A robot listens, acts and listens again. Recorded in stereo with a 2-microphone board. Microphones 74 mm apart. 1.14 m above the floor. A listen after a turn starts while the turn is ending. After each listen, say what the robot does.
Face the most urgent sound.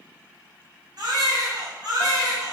Turn 60° right.
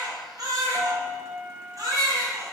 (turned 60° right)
Turn 55° right.
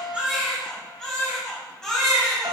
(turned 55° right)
Turn 10° left.
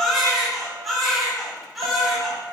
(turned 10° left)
Facing the baby crying, 2 to 4 m away.